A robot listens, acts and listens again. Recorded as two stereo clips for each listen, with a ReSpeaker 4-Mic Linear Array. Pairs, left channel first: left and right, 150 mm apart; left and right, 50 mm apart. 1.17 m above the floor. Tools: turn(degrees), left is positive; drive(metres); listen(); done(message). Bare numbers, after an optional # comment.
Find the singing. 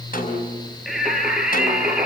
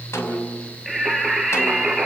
turn(-30)
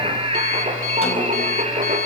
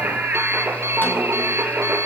# So it is at 135° right.
turn(-135)
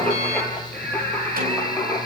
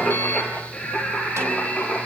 # The singing is now 10° left.
turn(10)
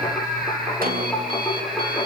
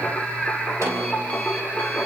done("Facing the singing.")